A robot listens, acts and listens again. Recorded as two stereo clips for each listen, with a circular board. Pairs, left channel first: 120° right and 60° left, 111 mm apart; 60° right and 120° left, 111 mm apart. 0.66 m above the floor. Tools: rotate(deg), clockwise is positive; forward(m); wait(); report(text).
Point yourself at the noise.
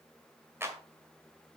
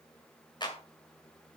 rotate(10)
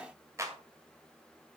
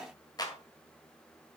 report("Facing the clap, 1 to 2 m away.")